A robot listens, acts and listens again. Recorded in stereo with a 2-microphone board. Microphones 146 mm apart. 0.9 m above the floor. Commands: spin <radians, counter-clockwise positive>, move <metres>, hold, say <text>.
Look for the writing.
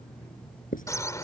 spin 1.22
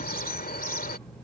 hold
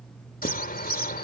hold
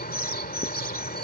say I heard writing, but can't make it out now. It was about straight ahead or 40° left.